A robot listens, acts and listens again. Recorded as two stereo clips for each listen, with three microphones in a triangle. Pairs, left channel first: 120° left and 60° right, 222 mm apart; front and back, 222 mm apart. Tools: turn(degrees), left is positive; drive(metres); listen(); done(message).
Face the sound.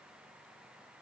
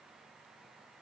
listen()
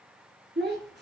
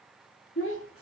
turn(degrees=-20)
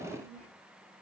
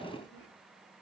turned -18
done("Facing the child speaking, 2 to 4 m away.")